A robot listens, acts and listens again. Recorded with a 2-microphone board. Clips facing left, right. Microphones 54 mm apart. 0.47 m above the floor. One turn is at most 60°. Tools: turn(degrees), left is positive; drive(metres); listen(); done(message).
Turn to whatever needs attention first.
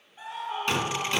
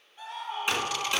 turn(degrees=15)
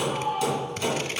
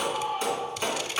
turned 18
done("Found it: a scream, straight ahead.")